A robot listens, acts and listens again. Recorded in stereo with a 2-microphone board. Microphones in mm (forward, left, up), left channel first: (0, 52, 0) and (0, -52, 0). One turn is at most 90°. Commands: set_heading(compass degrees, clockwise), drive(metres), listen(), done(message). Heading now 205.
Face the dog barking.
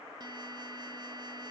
listen()
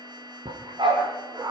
set_heading(250)
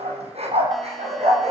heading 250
set_heading(340)
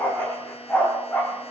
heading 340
done("Facing the dog barking, over 4 m away.")